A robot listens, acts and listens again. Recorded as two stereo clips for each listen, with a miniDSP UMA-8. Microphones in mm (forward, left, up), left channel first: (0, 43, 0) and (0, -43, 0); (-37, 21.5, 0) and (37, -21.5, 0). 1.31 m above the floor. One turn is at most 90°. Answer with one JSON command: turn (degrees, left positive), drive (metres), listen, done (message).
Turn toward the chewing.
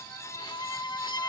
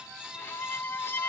{"listen": true}
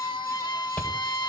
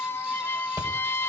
{"turn": 20}
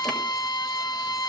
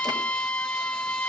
{"listen": true}
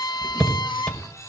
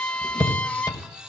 {"done": "Found it: chewing, straight ahead, over 4 m away."}